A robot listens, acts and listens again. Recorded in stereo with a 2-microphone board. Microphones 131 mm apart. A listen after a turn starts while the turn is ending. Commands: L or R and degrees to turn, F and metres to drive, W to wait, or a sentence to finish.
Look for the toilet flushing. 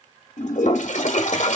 L65
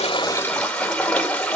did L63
L10
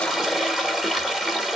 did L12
Facing the toilet flushing.